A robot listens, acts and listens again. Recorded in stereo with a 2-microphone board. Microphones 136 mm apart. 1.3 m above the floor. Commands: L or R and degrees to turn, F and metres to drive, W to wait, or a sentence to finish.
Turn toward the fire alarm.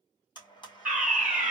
R30
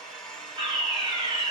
R140
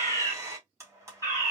L20
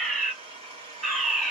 Found it: a fire alarm, straight ahead.